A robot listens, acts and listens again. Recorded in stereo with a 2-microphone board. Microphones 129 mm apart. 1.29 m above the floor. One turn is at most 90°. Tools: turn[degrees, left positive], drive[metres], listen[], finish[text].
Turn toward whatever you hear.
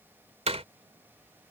Thought: The door slam: about 55° right or 125° right.
Action: turn[-55]
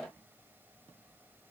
Action: listen[]
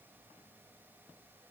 Action: finish[I heard a door slam, but can't make it out now. It was about straight ahead or 70° right.]